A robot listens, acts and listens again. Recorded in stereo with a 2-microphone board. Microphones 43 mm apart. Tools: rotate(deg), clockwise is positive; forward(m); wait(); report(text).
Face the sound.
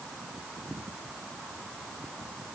wait()
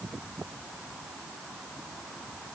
wait()
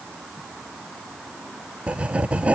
rotate(30)
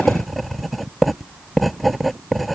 report("Facing the writing.")